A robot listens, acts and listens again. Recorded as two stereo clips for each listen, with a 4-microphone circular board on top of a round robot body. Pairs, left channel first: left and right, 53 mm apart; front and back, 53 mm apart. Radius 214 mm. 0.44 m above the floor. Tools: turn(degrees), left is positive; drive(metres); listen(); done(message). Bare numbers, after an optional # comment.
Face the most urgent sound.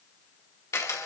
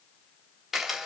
listen()
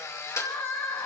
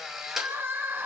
# The crying: 135° left.
turn(135)
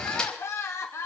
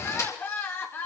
# The crying is now 50° left.
turn(50)
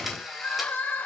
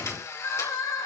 # The crying is now 30° left.
turn(30)
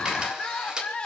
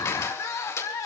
# The crying is now 20° left.
turn(20)
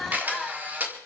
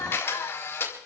done("Found it: crying, straight ahead.")